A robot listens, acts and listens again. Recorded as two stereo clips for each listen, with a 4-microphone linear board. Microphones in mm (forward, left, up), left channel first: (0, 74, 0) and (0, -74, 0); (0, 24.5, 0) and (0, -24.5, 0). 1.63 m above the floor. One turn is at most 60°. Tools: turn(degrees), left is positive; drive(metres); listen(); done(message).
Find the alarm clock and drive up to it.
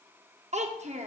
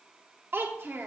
listen()
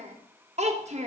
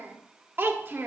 listen()
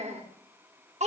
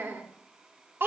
done("I can't make out an alarm clock to turn to.")